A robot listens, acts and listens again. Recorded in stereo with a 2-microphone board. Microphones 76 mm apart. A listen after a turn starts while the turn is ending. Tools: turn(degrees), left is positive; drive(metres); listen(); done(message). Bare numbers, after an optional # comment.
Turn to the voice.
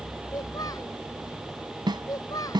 # The child speaking: about 60° left or 120° left.
turn(60)
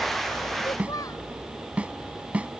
listen()
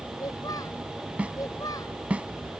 # So it is at 60° left.
turn(60)
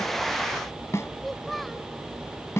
done("Facing the child speaking.")